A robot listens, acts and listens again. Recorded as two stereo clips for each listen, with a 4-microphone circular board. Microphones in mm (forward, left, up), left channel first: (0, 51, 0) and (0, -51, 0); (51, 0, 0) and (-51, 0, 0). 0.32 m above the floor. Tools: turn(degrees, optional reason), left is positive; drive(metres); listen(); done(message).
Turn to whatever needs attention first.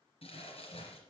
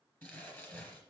listen()
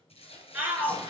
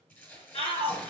turn(degrees=-15, reason="The shout: 15° right.")
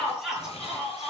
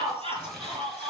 done("Facing the shout.")